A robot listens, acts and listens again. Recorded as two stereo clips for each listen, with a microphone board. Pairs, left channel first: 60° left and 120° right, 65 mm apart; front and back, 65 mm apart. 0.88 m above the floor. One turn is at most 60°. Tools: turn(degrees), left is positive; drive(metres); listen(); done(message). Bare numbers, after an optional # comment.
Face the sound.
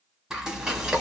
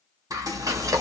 # The frying: 160° left.
turn(60)
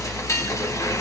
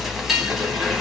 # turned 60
# The frying is now 95° left.
turn(60)
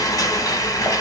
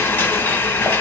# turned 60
# The frying is now 50° left.
turn(50)
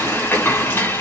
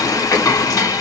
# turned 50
# The frying is now 10° left.
turn(10)
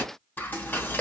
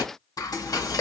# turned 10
done("Facing the frying.")